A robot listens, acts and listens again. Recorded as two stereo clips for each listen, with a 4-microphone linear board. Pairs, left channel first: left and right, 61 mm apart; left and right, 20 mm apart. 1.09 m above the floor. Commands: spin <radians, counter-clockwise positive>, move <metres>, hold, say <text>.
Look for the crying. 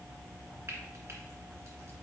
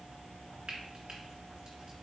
hold
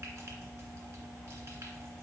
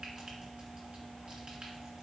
hold
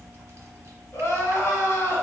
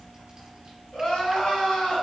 spin 0.79
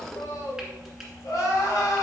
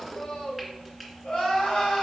spin 1.57
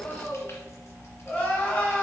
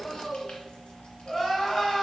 spin 0.52
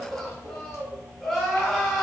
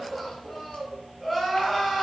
spin 0.17
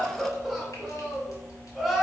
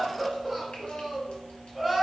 say Found it: crying, straight ahead.